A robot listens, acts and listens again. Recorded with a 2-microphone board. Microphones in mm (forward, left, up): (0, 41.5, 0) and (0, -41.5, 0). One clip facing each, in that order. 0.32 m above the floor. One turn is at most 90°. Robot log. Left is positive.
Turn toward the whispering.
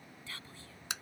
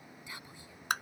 note: The whispering: about 15° right or 165° right.
cmd yaw -15
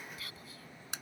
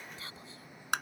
note: So it is at 150° right.
cmd yaw -90
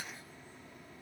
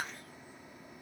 note: Nothing new. It was at 60° right.
cmd yaw -60
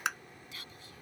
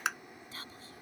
note: The whispering is now 40° right.
cmd yaw -40
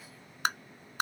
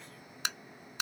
cmd idle
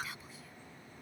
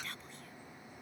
end: Facing the whispering.